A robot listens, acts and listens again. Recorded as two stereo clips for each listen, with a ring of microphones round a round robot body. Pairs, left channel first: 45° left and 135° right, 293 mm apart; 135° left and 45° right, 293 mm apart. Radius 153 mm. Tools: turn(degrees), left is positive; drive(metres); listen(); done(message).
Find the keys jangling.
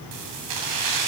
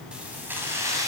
turn(degrees=-125)
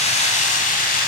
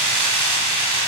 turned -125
turn(degrees=-15)
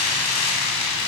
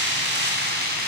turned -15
turn(degrees=15)
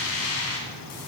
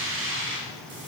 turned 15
done("Facing the keys jangling.")